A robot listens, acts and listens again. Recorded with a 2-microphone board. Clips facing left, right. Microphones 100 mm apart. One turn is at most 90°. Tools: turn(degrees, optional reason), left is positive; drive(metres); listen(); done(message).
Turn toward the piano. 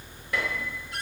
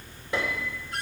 turn(degrees=-25, reason="The piano: about 25° right or 155° right.")
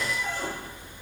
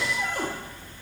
done("Facing the piano, 2 to 4 m away.")